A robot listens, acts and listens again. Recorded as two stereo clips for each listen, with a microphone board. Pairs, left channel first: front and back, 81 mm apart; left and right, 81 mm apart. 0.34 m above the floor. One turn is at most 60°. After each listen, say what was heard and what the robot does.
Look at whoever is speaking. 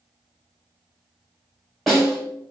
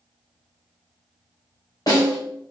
Keep listening.
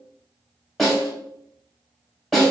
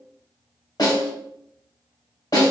Keep listening.
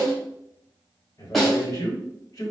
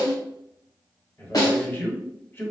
The man speaking: 30° left. Turn 30° left.
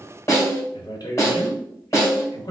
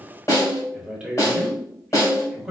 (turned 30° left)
The man speaking is now 10° right. Turn 10° right.
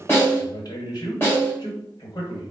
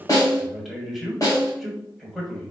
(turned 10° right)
Found it: a man speaking, straight ahead.